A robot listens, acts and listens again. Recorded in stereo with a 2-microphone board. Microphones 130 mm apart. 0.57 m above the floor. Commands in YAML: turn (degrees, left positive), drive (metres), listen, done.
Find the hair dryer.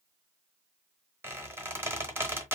listen: true
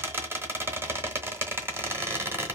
listen: true
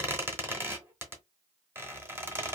done: "I can't make out a hair dryer to turn to."